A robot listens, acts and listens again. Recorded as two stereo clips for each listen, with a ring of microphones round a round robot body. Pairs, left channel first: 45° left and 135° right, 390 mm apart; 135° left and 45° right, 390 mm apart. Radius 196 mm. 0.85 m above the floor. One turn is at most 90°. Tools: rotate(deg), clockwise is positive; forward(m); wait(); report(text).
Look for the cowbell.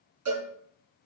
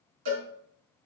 rotate(85)
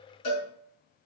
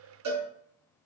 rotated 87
report("Found it: a cowbell, straight ahead.")